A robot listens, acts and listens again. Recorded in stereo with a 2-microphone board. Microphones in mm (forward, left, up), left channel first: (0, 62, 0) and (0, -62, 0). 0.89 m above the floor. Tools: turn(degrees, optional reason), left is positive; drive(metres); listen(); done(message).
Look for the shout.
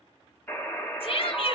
turn(degrees=50, reason="The shout: about 50° left or 130° left.")
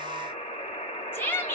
turn(degrees=20, reason="So it is at 20° left.")
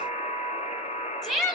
done("Found it: a shout, straight ahead, 1 to 2 m away.")